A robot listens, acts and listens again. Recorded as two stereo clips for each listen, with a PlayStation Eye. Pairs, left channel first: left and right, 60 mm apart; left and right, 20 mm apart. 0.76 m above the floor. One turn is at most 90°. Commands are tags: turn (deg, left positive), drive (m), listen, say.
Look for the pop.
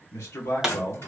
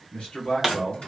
<turn deg="-30"/>
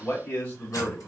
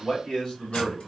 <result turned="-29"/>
<listen/>
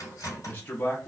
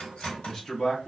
<say>I heard a pop, but can't make it out now. It was about 20° left or 140° right.</say>